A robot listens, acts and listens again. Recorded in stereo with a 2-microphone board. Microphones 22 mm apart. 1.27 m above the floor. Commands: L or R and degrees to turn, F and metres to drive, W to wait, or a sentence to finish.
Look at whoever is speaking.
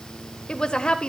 L45
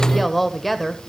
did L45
Found it: a woman speaking, straight ahead.